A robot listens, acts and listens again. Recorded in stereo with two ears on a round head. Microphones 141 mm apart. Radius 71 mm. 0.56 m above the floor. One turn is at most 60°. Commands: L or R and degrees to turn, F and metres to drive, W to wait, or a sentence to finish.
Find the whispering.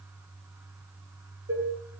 W
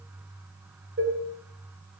W
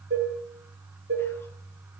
I can't make out whispering, only dishes clattering.